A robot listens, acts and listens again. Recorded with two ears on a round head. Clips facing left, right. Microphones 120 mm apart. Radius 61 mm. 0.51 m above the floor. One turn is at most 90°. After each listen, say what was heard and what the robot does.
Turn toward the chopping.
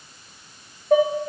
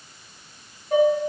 Keep listening.
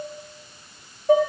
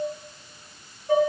Keep listening.
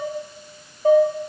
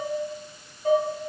I can't make out chopping, only dishes clattering.